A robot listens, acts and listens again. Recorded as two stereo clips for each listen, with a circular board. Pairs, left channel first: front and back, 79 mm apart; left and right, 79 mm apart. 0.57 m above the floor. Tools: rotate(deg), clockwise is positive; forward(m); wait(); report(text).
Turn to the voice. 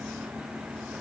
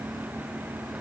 wait()
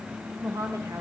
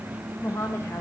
rotate(-145)
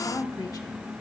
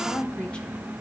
rotate(-15)
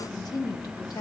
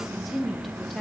report("Facing the woman speaking, 1 to 2 m away.")